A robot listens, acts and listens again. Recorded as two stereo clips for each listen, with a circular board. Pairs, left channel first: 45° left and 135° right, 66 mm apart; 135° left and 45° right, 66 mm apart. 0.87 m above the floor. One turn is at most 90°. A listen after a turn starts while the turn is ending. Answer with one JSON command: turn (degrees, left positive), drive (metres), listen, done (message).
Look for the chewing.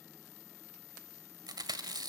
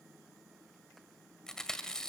{"turn": -90}
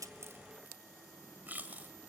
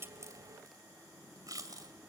{"turn": -70}
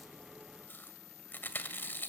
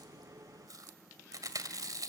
{"turn": -15}
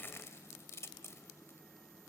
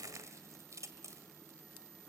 {"done": "Facing the chewing."}